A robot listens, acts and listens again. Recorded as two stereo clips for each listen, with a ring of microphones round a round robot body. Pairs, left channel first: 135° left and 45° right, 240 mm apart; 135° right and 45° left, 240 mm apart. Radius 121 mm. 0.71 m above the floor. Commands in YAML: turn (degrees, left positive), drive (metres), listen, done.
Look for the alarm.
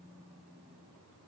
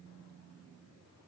listen: true
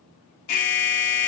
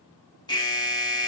turn: 150
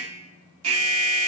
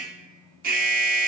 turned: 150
turn: -10
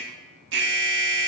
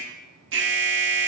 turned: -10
done: "Found it: an alarm, straight ahead."